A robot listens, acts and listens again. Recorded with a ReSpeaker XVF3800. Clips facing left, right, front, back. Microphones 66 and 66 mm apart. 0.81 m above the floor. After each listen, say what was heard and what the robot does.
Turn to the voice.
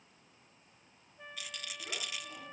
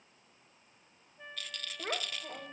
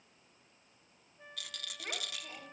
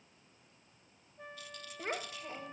The child speaking: 125° right. Turn 125° right.
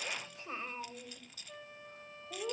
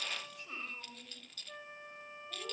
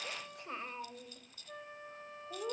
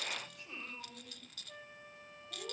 The child speaking is now 35° left. Turn 35° left.
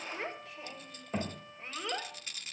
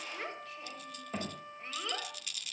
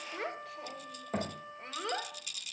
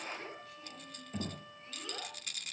The child speaking is now 10° left. Turn 10° left.
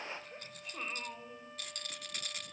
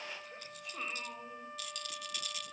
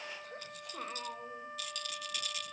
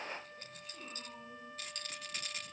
Facing the child speaking, 2 to 4 m away.